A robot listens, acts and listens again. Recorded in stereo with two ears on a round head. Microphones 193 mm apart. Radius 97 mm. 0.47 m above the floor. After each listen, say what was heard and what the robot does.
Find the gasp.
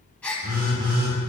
Turn 30° left.
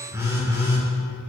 Keep listening.
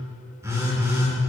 I heard a gasp, but can't make it out now. It was about 25° right or 145° left.